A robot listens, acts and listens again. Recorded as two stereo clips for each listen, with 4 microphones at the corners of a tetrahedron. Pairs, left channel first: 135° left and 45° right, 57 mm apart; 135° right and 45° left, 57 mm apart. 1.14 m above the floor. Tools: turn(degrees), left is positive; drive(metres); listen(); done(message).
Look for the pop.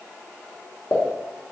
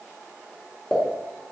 turn(degrees=150)
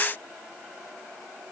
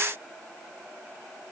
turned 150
done("Facing where the pop came from. I can't hear it now.")